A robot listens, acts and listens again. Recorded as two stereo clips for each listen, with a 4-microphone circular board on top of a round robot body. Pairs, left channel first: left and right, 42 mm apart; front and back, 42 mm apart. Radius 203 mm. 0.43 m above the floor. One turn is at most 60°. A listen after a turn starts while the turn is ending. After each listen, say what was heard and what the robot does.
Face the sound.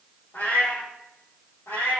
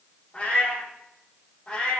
The cat meowing: 65° left. Turn 60° left.
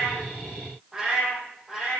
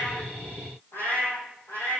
Found it: a cat meowing, straight ahead.